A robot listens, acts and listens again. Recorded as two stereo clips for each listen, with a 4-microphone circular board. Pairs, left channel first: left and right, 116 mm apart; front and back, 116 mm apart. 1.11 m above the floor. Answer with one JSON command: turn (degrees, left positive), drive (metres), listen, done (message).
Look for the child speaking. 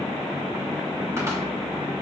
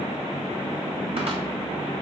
{"listen": true}
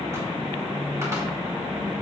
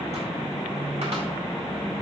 {"listen": true}
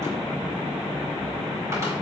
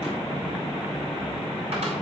{"done": "I can't make out a child speaking to turn to."}